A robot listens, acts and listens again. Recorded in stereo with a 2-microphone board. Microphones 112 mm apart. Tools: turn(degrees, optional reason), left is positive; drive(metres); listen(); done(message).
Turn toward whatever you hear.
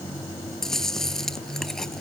turn(degrees=30)
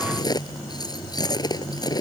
turn(degrees=145, reason="So it is at 145° left.")
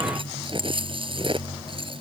turn(degrees=-50, reason="The chewing is now 50° right.")
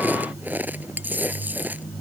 turn(degrees=-15, reason="The chewing is now 15° right.")
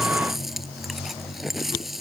done("Found it: chewing, straight ahead.")